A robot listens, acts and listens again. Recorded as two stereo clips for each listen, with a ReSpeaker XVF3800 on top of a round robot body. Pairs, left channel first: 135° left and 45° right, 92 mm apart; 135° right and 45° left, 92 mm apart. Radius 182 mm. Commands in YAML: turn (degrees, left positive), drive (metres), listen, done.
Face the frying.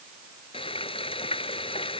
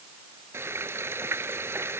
turn: 110
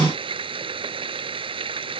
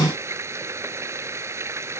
turn: -15
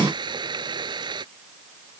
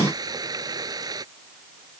done: "Facing the frying."